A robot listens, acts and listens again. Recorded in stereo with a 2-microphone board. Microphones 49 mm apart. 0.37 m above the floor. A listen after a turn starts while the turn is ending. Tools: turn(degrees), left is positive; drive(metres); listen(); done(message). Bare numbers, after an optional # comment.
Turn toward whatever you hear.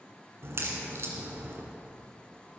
# The crack: about 60° right or 120° right.
turn(-60)
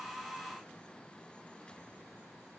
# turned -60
listen()
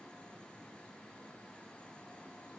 done("I heard a crack, but can't make it out now. It was about straight ahead or 60° right.")